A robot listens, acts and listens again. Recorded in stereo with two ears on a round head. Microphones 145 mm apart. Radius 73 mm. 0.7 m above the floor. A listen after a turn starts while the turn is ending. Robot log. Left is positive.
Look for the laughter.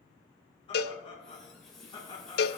note: The laughter: about 30° left or 150° left.
cmd yaw +30
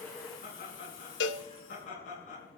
note: So it is at 125° left.
cmd yaw +125
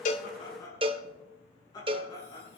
note: The laughter is now 25° left.
cmd yaw +25
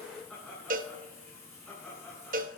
end: Facing the laughter, over 4 m away.